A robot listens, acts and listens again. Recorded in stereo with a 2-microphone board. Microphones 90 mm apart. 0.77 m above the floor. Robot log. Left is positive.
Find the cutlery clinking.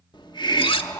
cmd yaw +90
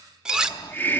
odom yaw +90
end: Facing the cutlery clinking, 1 to 2 m away.